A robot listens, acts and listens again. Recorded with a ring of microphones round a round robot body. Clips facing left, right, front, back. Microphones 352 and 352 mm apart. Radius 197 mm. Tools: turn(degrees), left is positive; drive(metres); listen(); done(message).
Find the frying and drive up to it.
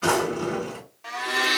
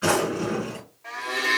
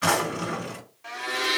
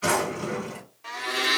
listen()
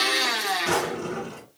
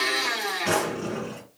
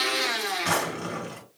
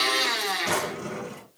listen()
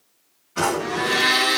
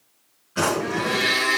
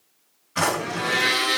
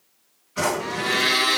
done("I can't make out frying, only a drawer and a blender.")